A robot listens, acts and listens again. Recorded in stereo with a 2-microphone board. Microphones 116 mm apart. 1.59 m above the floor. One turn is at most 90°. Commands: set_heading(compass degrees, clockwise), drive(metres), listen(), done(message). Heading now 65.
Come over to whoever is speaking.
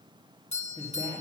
set_heading(25)
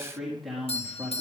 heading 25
drive(1.0)
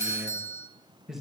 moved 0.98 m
drive(1.0)
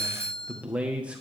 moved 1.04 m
set_heading(35)
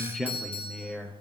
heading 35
drive(1.0)
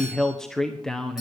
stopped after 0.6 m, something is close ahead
done("I am next to the man speaking.")